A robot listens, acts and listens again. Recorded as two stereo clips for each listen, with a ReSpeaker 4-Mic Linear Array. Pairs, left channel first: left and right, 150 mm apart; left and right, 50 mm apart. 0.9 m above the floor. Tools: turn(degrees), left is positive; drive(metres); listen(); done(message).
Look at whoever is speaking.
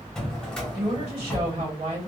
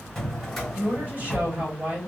turn(degrees=-45)
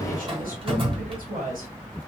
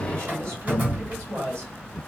turn(degrees=-90)
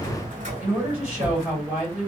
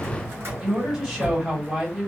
turn(degrees=-10)
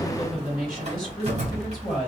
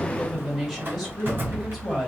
done("Facing the woman speaking, 1 to 2 m away.")